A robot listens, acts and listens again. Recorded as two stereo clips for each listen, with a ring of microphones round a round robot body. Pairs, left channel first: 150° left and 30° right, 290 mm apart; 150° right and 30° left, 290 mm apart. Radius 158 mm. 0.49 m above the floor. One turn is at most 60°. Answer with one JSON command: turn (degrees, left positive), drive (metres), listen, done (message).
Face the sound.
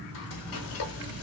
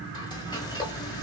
{"turn": 60}
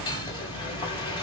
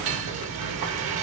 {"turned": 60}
{"turn": 60}
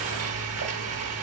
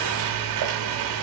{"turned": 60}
{"turn": 10}
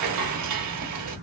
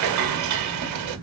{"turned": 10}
{"done": "Found it: frying, straight ahead, 1 to 2 m away."}